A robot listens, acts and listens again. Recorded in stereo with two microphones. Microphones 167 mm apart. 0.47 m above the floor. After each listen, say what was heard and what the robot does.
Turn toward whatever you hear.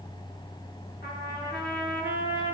Turn 90° left.
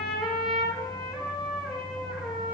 Facing the trumpet, over 4 m away.